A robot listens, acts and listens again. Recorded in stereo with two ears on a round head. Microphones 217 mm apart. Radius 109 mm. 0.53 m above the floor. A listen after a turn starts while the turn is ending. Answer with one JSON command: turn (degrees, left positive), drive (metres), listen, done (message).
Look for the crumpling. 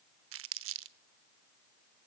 {"turn": -55}
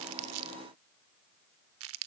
{"turn": -65}
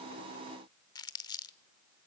{"turn": 15}
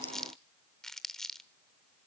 {"done": "Found it: crumpling, straight ahead, under 1 m away."}